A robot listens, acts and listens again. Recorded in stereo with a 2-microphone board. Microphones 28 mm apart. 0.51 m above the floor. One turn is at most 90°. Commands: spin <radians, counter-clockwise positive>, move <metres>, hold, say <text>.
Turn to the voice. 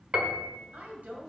spin -1.13
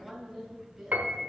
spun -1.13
spin -0.17
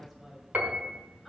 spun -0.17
say Found it: a woman speaking, straight ahead.